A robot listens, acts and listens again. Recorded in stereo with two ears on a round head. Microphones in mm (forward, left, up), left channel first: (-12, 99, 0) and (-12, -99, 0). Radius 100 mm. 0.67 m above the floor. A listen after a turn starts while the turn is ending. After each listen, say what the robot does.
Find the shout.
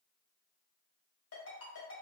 Keep listening.
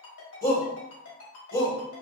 Turn 40° left.
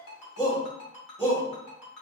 Turn 15° left.
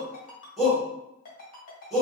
Found it: a shout, straight ahead.